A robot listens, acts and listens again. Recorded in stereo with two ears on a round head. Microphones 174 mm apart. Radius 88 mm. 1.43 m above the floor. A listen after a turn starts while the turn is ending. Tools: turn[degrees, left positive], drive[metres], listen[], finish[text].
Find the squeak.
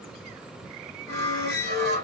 Thought: The squeak: about 55° left or 125° left.
Action: turn[55]
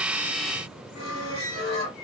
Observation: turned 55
Thought: So it is at 65° left.
Action: turn[65]
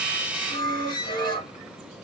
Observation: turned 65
Thought: The squeak is now 30° left.
Action: turn[30]
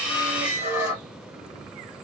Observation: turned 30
Thought: The squeak is now 10° right.
Action: turn[-10]
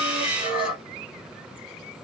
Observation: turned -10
Action: finish[Found it: a squeak, straight ahead, 1 to 2 m away.]